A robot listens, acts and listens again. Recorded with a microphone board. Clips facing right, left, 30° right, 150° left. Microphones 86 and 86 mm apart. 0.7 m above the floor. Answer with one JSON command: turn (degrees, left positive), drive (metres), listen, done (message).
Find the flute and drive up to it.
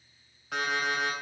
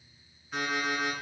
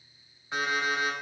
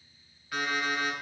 {"listen": true}
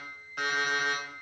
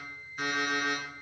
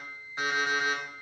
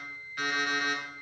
{"listen": true}
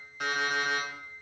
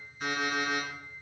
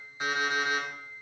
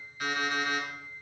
{"done": "I can't make out a flute, only an alarm clock."}